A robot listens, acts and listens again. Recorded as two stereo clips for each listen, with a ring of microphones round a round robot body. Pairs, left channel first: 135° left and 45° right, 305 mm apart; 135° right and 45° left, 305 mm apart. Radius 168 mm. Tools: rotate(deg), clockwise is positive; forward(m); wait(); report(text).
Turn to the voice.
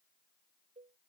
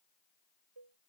wait()
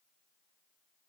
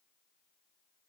wait()
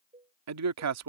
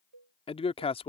rotate(65)
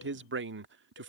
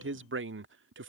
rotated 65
report("Facing the man speaking.")